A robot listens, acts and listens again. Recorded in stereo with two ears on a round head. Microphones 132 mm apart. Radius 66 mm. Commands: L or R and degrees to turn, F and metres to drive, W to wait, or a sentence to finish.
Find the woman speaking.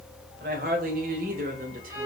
R65
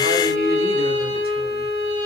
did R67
W
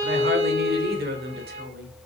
R80
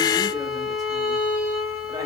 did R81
W
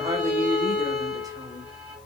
R25
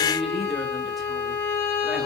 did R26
W
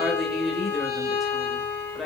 Facing the woman speaking.